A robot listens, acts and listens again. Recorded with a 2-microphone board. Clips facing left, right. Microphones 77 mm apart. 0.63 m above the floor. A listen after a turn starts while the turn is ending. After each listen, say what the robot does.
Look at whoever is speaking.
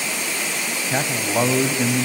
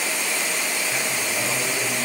Turn 45° left.
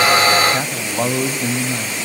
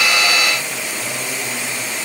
Turn 90° left.
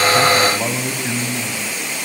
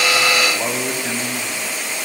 Facing the man speaking.